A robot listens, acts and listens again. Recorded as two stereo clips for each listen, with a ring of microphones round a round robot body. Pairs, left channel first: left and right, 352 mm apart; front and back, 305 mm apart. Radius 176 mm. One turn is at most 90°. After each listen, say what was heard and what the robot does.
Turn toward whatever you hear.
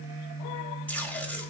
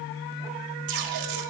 The tape being pulled: 175° left. Turn 90° left.
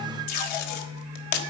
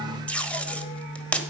The tape being pulled is now 85° left. Turn 85° left.
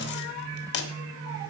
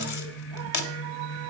The tape being pulled is now 30° left. Turn 30° left.
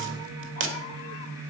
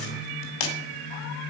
The tape being pulled is now 30° right. Turn 30° right.
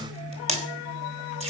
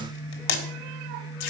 The tape being pulled is now 15° right. Turn 15° right.
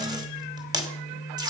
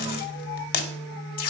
The tape being pulled is now 10° right. Turn 10° right.
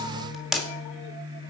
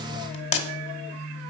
Facing the tape being pulled, 1 to 2 m away.